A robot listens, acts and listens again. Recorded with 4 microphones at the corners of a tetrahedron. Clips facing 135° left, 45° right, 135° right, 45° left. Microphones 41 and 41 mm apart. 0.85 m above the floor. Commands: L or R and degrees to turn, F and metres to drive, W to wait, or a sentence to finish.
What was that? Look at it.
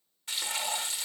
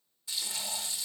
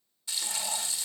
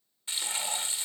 L95
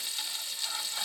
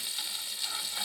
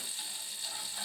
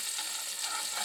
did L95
L35
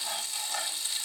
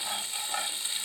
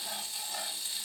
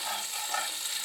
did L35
L20
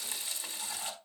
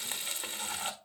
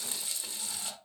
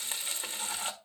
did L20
Facing the frying.